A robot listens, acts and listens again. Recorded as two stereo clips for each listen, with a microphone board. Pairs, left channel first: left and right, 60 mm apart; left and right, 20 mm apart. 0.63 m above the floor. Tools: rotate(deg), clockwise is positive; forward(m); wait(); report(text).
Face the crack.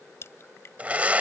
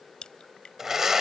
rotate(-50)
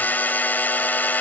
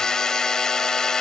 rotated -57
wait()
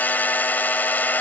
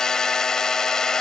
report("I heard a crack, but can't make it out now. It was about 10° right or 75° left.")